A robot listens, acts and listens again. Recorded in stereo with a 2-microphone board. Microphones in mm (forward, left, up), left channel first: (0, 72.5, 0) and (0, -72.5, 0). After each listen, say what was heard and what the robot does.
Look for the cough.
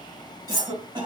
The cough: about 30° right or 150° right. Turn 30° right.
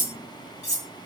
Keep listening.
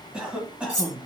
So it is at 10° right. Turn 10° right.
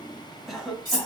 Facing the cough.